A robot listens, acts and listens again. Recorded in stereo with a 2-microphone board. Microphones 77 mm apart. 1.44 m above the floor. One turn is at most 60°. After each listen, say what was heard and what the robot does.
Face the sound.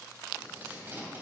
The tape being pulled: about 25° right or 155° right. Turn 25° right.
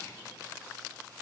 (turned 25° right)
Keep listening.
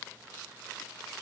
Keep listening.
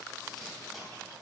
I heard tape being pulled, but can't make it out now. It was about straight ahead or 130° right.